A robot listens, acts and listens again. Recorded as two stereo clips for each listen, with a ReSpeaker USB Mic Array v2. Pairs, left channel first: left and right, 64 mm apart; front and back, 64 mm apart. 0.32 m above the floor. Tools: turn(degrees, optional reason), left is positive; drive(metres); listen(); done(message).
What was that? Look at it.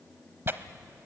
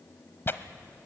turn(degrees=-45, reason="The tearing paper: 45° right.")
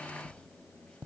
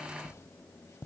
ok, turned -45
listen()
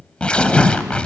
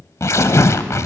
turn(degrees=20, reason="The tearing paper is now 20° left.")
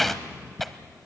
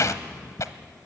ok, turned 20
done("Found it: tearing paper, straight ahead, under 1 m away.")